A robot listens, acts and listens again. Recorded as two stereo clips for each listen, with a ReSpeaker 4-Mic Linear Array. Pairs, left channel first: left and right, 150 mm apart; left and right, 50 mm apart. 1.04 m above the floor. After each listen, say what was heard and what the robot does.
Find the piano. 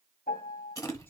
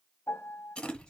The piano: about 70° left or 110° left. Turn 70° left.
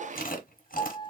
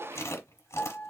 So it is at 35° left. Turn 35° left.
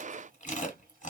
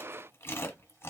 Keep listening.
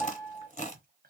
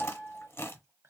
Found it: a piano, straight ahead.